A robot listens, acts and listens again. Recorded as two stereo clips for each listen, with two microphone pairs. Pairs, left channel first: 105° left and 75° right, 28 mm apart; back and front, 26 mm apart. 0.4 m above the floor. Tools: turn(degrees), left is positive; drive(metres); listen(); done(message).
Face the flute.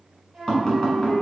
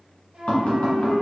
done("Facing the flute, 1 to 2 m away.")